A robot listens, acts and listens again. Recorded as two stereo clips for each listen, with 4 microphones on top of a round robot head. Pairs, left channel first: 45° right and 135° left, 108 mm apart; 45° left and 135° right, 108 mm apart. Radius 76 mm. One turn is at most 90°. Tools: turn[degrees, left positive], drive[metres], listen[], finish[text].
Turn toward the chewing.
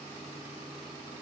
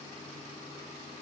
Action: listen[]
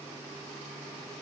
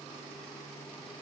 Action: listen[]
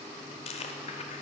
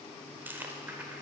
Thought: The chewing: 60° right.
Action: turn[-60]
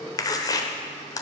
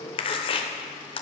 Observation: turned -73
Thought: The chewing is now 10° left.
Action: turn[10]
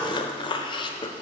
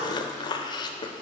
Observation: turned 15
Action: finish[Found it: chewing, straight ahead, under 1 m away.]